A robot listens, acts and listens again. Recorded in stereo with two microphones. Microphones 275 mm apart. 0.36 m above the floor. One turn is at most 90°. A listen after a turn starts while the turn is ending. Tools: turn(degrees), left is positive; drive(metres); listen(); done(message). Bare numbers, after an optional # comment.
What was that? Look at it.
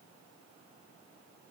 listen()
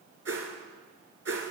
# The whoosh: about 60° right or 120° right.
turn(-60)
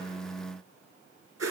# So it is at 60° right.
turn(-60)
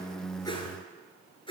# The whoosh is now 20° left.
turn(20)
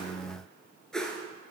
done("Facing the whoosh.")